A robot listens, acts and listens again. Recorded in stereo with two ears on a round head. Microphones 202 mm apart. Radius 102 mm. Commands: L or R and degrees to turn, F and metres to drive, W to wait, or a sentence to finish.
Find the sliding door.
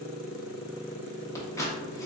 W
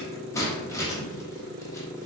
W
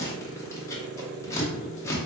I can't make out a sliding door to turn to.